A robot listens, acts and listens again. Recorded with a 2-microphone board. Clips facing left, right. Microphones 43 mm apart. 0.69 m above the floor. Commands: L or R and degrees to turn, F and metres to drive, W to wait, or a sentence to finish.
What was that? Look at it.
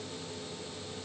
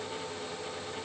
W
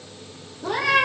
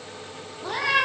R30
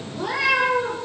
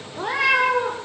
R140
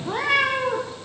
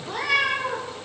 L35
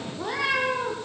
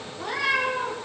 L10
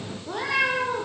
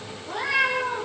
Found it: a cat meowing, straight ahead.